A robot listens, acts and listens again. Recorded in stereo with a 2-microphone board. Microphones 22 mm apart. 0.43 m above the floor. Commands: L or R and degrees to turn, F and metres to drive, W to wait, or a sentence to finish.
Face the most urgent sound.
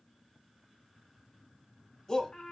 L25
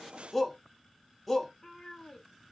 Facing the shout, 1 to 2 m away.